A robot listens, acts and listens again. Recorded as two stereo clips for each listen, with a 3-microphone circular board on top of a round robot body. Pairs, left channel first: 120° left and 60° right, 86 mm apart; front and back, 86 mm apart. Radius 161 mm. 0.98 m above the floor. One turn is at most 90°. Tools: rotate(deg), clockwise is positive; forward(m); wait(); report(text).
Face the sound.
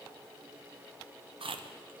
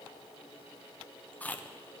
rotate(70)
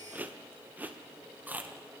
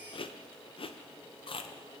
rotate(-10)
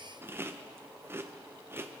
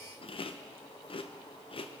report("Found it: chewing, straight ahead.")